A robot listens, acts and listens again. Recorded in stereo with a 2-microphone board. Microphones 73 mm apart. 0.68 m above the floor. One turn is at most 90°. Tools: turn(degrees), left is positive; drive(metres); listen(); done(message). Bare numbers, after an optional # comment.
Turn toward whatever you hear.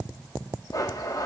# The blender: about 55° left or 125° left.
turn(55)
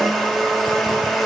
done("Facing the blender.")